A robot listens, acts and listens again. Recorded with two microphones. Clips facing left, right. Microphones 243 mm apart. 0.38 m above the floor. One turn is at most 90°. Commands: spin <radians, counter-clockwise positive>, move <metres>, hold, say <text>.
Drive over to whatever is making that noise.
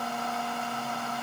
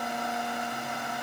hold
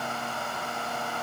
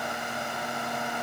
hold
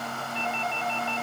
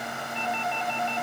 spin 1.05
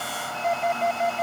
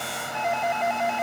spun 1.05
spin 0.70
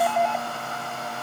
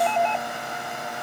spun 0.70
spin 0.17
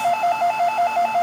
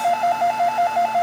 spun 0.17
move 1.0
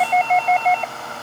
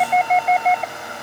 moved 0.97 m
move 1.0
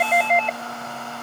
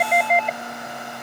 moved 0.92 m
move 1.0
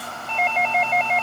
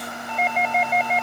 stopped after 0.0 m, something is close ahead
spin -0.17
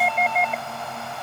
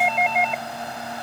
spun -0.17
say Arrived at the doorbell, straight ahead.